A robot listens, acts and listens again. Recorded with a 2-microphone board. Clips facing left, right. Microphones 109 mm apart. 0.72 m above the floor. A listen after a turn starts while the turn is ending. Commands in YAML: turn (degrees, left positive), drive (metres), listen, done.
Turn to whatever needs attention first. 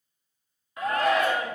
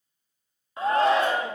turn: -30
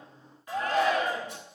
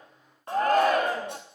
turn: -115
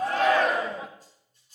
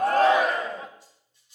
done: "Found it: a shout, straight ahead."